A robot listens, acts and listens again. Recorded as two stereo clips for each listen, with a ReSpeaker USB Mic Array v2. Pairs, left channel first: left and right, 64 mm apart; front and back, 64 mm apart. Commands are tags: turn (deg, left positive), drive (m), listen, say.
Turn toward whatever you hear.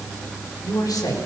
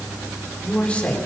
<turn deg="70"/>
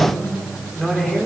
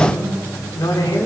<say>Facing the man speaking.</say>